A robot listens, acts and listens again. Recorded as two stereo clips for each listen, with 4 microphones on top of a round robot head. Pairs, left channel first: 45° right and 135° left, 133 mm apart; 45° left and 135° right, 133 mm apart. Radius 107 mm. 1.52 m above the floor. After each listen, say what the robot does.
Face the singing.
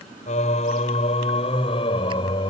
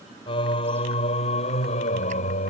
Turn 10° left.
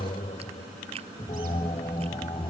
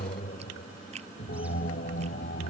Turn 15° left.
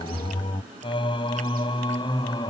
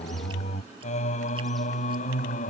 Turn 15° left.
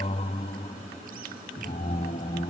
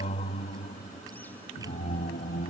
Facing the singing.